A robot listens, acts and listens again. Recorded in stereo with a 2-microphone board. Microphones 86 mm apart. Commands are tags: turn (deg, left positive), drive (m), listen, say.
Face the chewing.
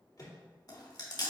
<turn deg="50"/>
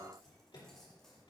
<listen/>
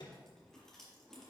<listen/>
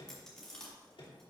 <turn deg="10"/>
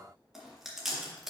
<say>Facing the chewing.</say>